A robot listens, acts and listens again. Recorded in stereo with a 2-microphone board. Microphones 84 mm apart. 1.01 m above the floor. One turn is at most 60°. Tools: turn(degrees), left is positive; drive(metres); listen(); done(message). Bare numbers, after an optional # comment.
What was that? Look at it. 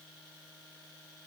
listen()
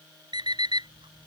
# The alarm clock: about 65° right or 115° right.
turn(-60)
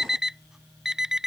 done("Found it: an alarm clock, straight ahead.")